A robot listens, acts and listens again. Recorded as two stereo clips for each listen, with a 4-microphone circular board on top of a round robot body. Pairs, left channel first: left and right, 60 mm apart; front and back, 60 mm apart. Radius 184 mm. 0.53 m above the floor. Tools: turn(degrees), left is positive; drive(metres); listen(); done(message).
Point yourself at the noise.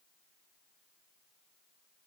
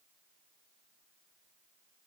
listen()
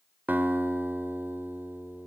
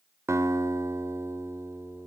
turn(degrees=-145)
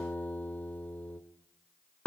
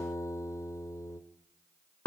turn(degrees=30)
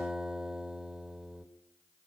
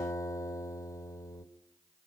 turn(degrees=-10)
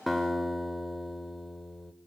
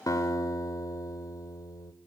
done("Facing the guitar.")